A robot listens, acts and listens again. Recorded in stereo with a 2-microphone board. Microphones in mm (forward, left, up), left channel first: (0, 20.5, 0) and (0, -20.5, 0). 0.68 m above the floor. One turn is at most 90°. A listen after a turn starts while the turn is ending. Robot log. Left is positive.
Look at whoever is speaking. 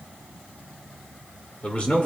note: The man speaking: about 30° left or 150° left.
cmd yaw +30
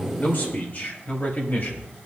note: So it is at 130° left.
cmd yaw +90
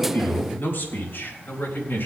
note: The man speaking is now 65° left.
cmd yaw +65
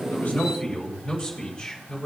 note: The man speaking is now 15° left.
cmd yaw +15
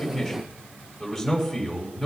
end: Found it: a man speaking, straight ahead.